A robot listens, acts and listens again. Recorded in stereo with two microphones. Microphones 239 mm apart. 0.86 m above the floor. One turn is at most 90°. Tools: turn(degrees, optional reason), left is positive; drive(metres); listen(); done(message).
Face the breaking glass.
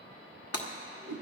turn(degrees=90)
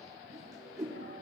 done("I heard breaking glass from this way, but can't make it out now.")